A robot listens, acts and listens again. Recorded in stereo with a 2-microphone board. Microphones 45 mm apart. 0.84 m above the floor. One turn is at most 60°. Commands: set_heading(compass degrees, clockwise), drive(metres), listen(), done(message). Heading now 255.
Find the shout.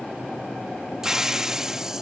listen()
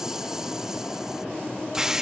listen()
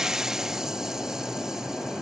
done("I can't make out a shout to turn to.")